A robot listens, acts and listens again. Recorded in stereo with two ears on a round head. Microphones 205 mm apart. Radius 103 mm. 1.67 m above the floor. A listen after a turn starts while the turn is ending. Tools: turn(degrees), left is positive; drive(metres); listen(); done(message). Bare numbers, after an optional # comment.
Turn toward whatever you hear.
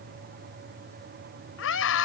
# The scream: about 65° left or 115° left.
turn(65)
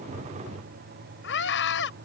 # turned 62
# So it is at 50° left.
turn(50)
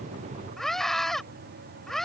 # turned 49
done("Found it: a scream, straight ahead.")